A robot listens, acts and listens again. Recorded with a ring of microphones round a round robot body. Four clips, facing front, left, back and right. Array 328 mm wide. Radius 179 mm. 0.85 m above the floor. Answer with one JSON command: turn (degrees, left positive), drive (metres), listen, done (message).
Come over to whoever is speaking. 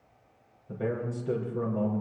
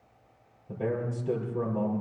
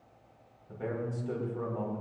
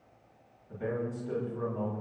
{"turn": 60}
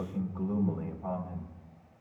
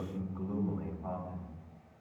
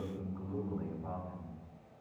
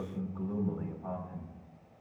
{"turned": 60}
{"drive": 1.0}
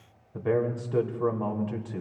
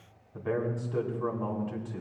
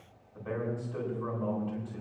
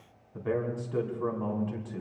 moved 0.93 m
{"drive": 1.0}
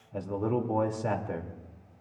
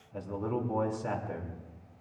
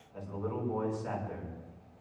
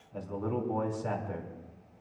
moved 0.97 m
{"drive": 1.0}
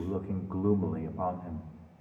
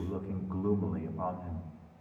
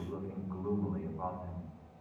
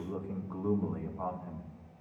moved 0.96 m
{"turn": 10}
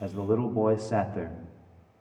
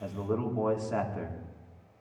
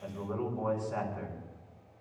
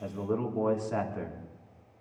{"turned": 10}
{"drive": 1.0}
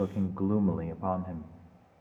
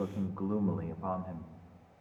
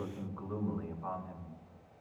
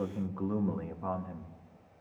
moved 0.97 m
{"drive": 1.0}
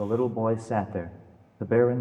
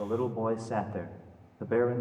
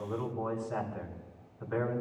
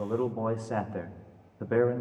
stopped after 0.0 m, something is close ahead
{"turn": -10}
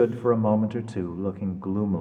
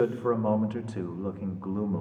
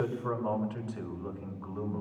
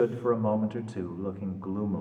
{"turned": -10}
{"done": "Arrived at the man speaking, straight ahead."}